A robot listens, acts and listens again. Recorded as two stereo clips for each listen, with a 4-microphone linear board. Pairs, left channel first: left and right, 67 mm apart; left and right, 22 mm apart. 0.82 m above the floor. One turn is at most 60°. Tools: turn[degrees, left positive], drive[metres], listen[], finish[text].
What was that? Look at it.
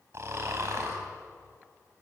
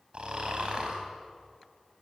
Thought: The snoring: about 45° right or 135° right.
Action: turn[-45]
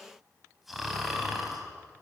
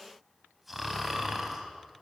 Action: finish[Facing the snoring.]